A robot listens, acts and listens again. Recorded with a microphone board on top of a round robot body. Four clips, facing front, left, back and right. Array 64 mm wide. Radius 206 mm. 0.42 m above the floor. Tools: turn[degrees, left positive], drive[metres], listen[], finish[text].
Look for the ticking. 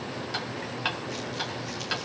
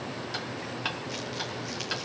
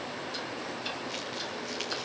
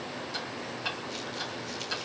Thought: The ticking: 25° left.
Action: turn[25]
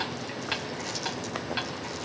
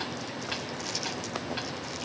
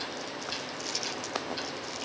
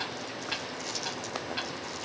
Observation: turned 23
Action: finish[Found it: ticking, straight ahead.]